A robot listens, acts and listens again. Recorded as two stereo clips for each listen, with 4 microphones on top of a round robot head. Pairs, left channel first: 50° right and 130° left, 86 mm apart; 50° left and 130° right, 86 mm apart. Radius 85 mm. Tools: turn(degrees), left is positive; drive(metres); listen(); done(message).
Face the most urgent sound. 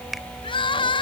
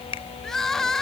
turn(degrees=-35)
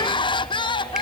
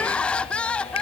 turn(degrees=-30)
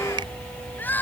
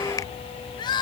turn(degrees=20)
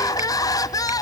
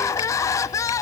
done("Found it: crying, straight ahead.")